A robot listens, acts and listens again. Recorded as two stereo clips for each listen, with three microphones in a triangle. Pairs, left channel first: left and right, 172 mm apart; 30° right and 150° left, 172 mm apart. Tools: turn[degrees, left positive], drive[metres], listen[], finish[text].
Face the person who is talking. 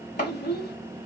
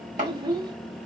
Thought: The child speaking: 90° left.
Action: turn[90]
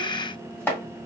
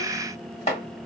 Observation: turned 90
Action: listen[]
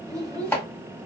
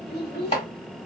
Thought: The child speaking is now 20° right.
Action: turn[-20]
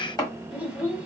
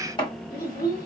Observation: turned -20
Action: finish[Facing the child speaking, 1 to 2 m away.]